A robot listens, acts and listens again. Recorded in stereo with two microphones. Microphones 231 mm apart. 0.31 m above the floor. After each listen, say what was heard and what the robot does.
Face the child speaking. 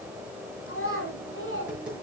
The child speaking: about 70° left or 110° left. Turn 70° left.
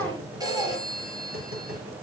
Keep listening.
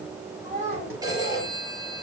So it is at 35° right. Turn 35° right.
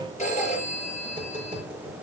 Keep listening.
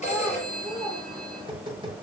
Found it: a child speaking, straight ahead.